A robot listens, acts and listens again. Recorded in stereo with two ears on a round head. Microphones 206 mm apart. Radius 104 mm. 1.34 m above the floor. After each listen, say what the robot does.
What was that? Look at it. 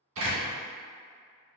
Turn 60° right.
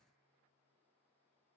Keep listening.
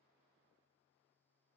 I heard a door slam, but can't make it out now. It was about straight ahead or 60° right.